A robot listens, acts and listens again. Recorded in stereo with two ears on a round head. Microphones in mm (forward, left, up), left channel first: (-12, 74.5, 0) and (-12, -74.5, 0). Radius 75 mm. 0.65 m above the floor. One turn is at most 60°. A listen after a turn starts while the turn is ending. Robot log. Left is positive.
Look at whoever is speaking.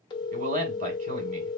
note: The man speaking: about 50° right or 130° right.
cmd yaw -50
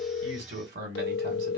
note: So it is at 75° right.
cmd yaw -60
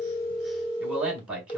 note: The man speaking is now 10° right.
cmd yaw -10
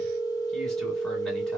cmd idle
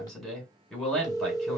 end: Facing the man speaking.